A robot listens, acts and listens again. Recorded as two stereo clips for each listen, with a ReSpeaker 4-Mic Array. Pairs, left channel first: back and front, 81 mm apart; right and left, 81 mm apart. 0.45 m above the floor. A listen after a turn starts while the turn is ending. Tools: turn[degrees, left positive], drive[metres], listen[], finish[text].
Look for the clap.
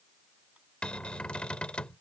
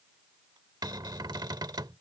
Action: listen[]
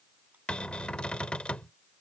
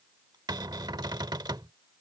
Action: listen[]
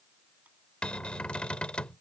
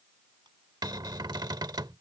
Action: finish[I can't make out a clap, only a cupboard door.]